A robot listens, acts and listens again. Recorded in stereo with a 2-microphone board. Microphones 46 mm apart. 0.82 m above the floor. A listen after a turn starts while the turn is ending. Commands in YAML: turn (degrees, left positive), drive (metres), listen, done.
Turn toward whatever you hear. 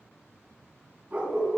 turn: -30
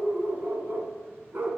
turn: -135
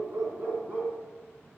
turn: -45
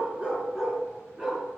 turn: -15
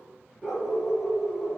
done: "Facing the dog barking, over 4 m away."